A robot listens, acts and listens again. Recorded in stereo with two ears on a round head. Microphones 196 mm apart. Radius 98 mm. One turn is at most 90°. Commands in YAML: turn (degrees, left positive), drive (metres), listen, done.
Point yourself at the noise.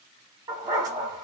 turn: -20
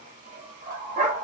turn: -90
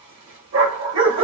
turn: -60
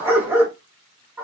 turn: -10
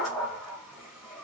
done: "Facing the dog barking."